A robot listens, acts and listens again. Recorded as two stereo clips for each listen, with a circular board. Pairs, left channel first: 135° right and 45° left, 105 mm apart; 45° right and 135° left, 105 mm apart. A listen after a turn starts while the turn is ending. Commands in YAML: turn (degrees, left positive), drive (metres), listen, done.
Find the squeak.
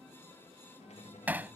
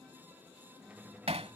turn: -150
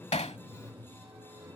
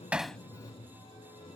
turn: -20
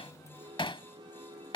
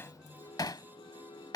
done: "Found it: a squeak, straight ahead."